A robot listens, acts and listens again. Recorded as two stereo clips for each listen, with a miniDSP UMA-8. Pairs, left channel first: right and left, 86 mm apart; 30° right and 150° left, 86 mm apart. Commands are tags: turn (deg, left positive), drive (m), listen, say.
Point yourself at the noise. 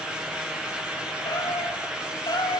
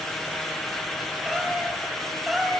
<turn deg="-120"/>
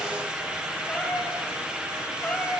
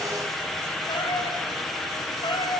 <turn deg="-10"/>
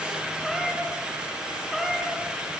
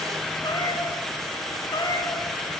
<say>Facing the cat meowing, over 4 m away.</say>